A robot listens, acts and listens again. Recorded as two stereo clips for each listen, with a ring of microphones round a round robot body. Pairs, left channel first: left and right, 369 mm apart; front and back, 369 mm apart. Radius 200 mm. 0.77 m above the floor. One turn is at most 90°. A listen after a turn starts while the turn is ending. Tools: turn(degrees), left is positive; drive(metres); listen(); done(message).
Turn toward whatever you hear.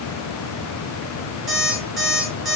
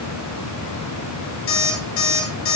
done("Found it: an alarm clock, straight ahead, over 4 m away.")